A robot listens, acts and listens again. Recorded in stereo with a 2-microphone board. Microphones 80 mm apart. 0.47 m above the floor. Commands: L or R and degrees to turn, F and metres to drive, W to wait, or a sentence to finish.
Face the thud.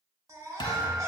L75
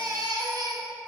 W
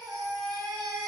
I heard a thud, but can't make it out now. It was about straight ahead or 30° left.